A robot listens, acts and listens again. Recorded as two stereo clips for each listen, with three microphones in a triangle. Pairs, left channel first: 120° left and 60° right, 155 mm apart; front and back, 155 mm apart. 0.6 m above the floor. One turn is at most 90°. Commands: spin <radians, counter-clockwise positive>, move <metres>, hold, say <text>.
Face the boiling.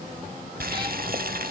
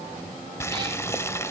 spin -1.31
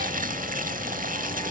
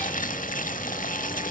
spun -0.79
spin -0.52
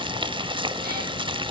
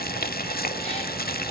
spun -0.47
say Found it: boiling, straight ahead, under 1 m away.